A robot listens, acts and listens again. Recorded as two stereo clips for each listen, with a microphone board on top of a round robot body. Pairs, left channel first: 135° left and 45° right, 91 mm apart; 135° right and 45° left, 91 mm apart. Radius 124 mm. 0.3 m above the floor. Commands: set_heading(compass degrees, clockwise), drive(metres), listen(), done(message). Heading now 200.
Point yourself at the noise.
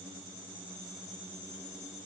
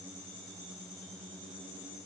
listen()
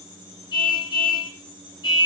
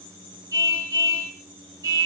set_heading(100)
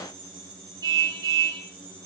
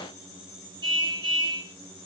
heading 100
done("Facing the car horn, over 4 m away.")